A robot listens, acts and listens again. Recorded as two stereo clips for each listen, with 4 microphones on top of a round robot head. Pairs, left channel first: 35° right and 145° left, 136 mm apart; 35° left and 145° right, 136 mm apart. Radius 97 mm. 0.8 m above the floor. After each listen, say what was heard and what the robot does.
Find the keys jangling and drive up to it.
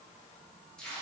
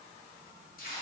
Keep listening.
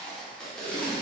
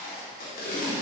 Keep listening.
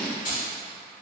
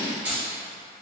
The keys jangling: 65° right. Turn 65° right.
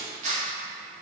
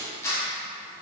Keep listening.
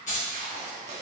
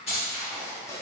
Drive 1.0 m forward.
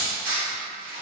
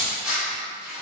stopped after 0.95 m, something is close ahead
The keys jangling is now 20° right. Turn 20° right.
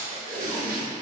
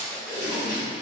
Keep listening.
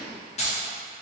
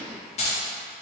Arrived at the keys jangling, straight ahead.